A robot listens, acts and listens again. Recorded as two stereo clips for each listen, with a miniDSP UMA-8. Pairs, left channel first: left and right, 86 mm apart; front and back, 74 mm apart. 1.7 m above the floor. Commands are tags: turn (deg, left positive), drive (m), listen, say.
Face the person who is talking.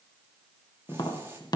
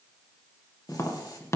<listen/>
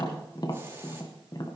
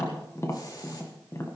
<listen/>
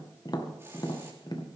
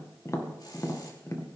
<say>I can't make out anyone speaking, only tapping and a hiss.</say>